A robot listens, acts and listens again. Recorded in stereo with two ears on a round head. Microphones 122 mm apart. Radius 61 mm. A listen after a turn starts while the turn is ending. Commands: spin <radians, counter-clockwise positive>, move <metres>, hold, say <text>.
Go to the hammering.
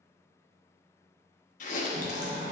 spin -0.87
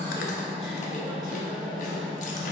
move 1.0
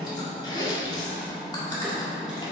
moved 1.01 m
move 1.0
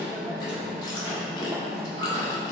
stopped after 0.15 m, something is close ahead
spin -0.17
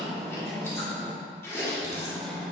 say I am next to the hammering.